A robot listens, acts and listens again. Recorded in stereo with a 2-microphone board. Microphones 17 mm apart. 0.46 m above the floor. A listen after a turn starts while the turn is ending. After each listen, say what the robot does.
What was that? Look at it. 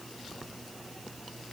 Keep listening.
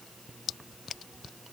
Keep listening.
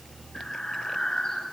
Turn 50° left.
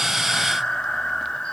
Turn 85° left.
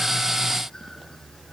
Keep listening.
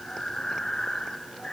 Turn 30° left.
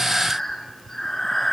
Turn 10° left.
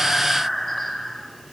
Found it: breathing, straight ahead, 2 to 4 m away.